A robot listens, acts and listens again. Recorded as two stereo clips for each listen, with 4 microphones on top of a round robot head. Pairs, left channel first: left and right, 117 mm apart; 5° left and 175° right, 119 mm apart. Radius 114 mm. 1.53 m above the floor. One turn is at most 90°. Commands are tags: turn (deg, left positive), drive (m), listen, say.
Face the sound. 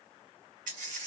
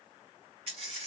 <turn deg="-90"/>
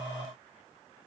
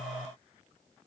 <turn deg="-30"/>
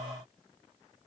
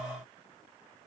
<say>I heard a dropped coin from this way, but can't make it out now.</say>